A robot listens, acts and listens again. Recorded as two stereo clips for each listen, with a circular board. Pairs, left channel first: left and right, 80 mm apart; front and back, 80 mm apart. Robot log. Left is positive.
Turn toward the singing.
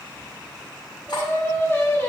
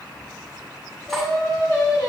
note: The singing: 30° left.
cmd yaw +30
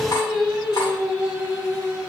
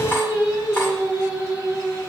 note: The singing is now 25° right.
cmd yaw -25
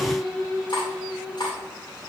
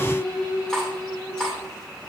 note: The singing is now 10° right.
cmd yaw -10
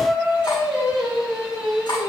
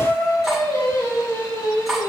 note: The singing is now 10° right.
cmd yaw -10
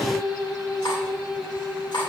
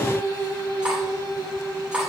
end: Facing the singing, 2 to 4 m away.